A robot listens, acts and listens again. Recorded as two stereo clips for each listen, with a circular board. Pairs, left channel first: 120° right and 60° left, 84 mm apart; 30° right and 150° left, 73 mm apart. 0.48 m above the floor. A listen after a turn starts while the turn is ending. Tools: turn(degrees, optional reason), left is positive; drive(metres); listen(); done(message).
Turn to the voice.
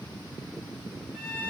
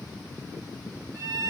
listen()
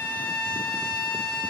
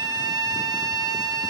listen()
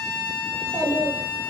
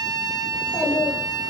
turn(degrees=90, reason="The child speaking: 90° left.")
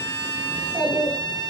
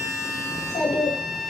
done("Found it: a child speaking, straight ahead, 1 to 2 m away.")